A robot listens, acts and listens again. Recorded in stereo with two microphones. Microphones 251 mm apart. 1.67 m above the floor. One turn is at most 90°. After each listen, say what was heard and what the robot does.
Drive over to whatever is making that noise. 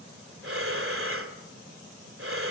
The breathing: about 55° right or 125° right. Turn 55° right.
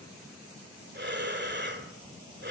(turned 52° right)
So it is at 50° right. Turn 50° right.
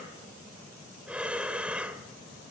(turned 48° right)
Drive 1.0 m forward.
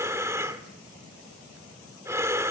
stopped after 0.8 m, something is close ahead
The breathing is now 15° right. Turn 15° right.
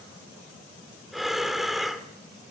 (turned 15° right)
I am next to the breathing.